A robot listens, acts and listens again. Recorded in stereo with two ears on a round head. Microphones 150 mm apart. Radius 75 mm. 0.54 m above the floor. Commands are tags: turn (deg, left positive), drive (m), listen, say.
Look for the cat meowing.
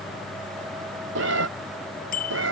<turn deg="-90"/>
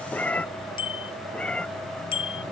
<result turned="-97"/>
<say>Found it: a cat meowing, straight ahead.</say>